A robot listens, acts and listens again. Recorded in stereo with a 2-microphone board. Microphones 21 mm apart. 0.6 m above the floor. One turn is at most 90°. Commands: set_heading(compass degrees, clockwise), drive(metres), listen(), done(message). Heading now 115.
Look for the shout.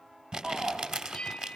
set_heading(150)
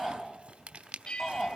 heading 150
done("Facing the shout, over 4 m away.")